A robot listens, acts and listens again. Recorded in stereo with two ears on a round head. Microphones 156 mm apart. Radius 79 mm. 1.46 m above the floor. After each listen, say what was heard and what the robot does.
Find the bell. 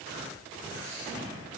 Keep listening.
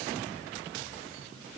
Keep listening.
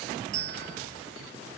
The bell: about 70° right or 110° right. Turn 70° right.
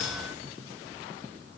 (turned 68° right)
Keep listening.
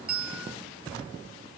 Facing the bell, 1 to 2 m away.